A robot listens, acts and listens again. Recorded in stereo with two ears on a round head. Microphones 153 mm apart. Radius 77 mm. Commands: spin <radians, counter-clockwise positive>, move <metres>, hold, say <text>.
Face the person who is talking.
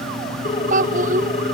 spin -0.87
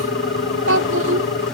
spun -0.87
spin -1.40
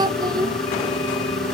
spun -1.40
spin -0.44
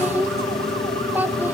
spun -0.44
spin -0.17
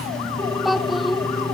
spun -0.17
say Facing the child speaking.